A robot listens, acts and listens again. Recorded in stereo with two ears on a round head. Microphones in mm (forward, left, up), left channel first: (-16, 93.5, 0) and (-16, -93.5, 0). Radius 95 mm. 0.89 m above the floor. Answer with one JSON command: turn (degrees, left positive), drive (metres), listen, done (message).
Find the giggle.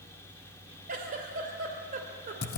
{"turn": -45}
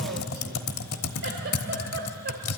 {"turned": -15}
{"listen": true}
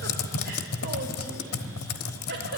{"listen": true}
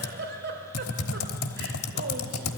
{"turn": -120}
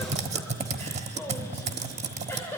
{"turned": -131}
{"turn": 10}
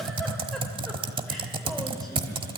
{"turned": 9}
{"listen": true}
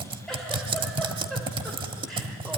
{"listen": true}
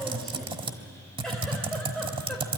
{"done": "Facing where the giggle came from. I can't hear it now."}